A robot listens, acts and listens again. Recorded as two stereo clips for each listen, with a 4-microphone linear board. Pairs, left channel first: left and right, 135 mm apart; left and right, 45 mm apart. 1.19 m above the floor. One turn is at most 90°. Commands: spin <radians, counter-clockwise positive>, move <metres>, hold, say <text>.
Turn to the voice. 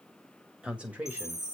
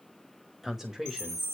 spin -0.52
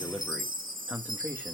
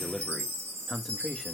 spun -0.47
spin -0.26
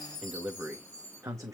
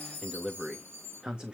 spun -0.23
spin -0.44
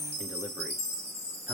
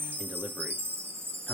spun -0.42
hold
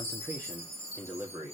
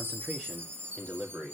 spin -0.35
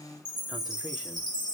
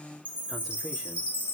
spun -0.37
hold
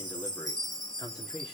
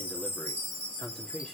spin 0.52
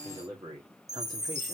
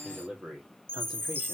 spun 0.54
spin -0.52
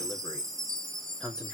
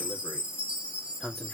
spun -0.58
say Found it: a man speaking, straight ahead.